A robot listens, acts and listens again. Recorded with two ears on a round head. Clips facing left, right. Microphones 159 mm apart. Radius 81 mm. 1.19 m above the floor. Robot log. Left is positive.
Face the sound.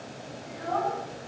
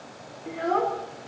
note: The child speaking: about 65° right or 115° right.
cmd yaw -65
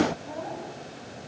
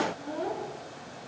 note: So it is at 55° right.
cmd yaw -55
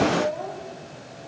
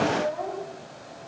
end: Facing the child speaking, over 4 m away.